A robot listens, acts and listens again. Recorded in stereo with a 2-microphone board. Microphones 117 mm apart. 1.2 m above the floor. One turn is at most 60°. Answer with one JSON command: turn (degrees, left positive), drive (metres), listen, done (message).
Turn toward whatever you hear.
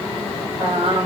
{"turn": -60}
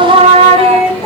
{"turn": -50}
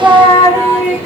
{"turn": -20}
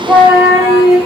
{"done": "Facing the singing, 2 to 4 m away."}